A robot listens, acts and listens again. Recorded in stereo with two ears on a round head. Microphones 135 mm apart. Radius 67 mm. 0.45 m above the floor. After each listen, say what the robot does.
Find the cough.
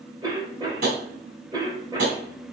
Turn 25° right.
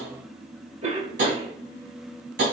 Turn 125° right.
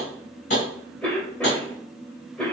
Facing the cough, 1 to 2 m away.